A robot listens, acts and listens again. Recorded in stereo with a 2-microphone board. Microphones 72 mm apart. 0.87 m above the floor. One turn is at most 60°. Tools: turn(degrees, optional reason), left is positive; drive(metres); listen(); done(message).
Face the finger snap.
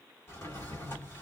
listen()
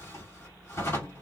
listen()
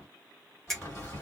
turn(degrees=30)
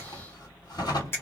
turn(degrees=60, reason="So it is at 145° left.")
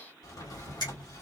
turn(degrees=60, reason="Nothing new. It was at 85° left.")
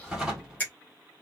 turn(degrees=25, reason="The finger snap is now 25° left.")
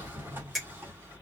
done("Facing the finger snap.")